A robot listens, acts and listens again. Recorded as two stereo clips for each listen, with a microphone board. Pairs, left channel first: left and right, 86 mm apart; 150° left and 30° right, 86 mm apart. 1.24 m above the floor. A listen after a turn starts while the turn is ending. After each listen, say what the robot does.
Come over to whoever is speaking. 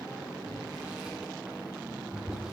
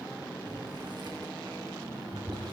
Keep listening.
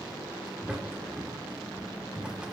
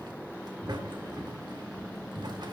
Keep listening.
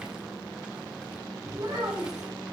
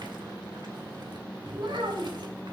Turn 50° right.
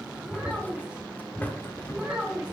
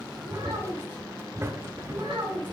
Turn 15° right.
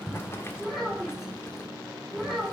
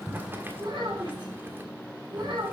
Drive 1.0 m forward.
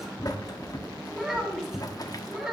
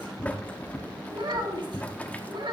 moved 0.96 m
Drive 1.0 m forward.
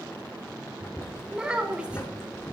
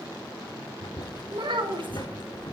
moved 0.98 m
Turn 15° right.
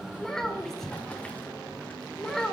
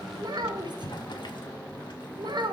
Drive 1.0 m forward.
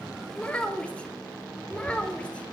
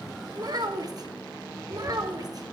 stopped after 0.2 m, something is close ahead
Turn 15° left.
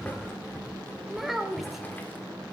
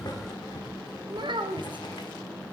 I am next to the child speaking.